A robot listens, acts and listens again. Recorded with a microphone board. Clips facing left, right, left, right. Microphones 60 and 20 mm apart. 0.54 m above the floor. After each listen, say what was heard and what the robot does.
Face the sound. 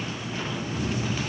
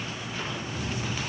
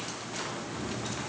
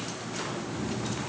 The cat meowing: about 55° right or 125° right. Turn 55° right.
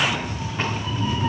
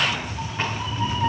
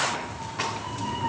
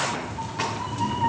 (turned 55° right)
So it is at 80° right. Turn 80° right.
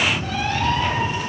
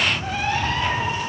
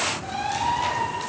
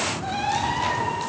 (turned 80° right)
The cat meowing is now 40° right. Turn 40° right.
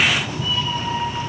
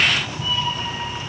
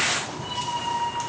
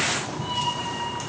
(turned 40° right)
The cat meowing is now 20° right. Turn 20° right.
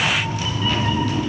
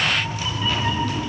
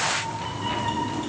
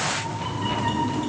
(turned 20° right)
Found it: a cat meowing, straight ahead, 1 to 2 m away.